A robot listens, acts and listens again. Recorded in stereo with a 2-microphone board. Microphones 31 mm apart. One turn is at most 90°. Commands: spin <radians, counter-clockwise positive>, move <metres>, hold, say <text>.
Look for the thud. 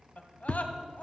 spin 0.61
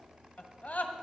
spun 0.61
hold
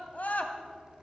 say I heard a thud, but can't make it out now. It was about straight ahead or 110° left.